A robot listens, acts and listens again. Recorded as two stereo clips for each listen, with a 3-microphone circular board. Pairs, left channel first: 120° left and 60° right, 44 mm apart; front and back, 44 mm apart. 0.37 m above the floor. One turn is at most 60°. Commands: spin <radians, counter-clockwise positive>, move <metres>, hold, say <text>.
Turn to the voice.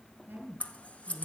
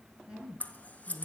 spin -1.05
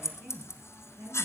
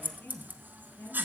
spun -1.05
spin -0.61
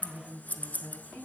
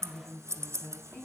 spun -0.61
spin 0.17
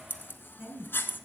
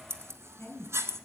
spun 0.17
say Facing the woman speaking, 2 to 4 m away.